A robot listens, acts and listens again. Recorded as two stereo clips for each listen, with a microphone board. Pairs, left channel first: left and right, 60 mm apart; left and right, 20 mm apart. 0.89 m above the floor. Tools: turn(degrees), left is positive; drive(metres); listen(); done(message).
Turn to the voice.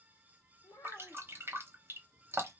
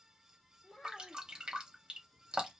turn(degrees=70)
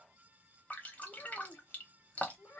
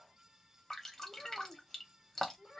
turn(degrees=35)
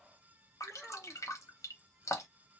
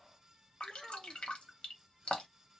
done("Facing the child speaking, 1 to 2 m away.")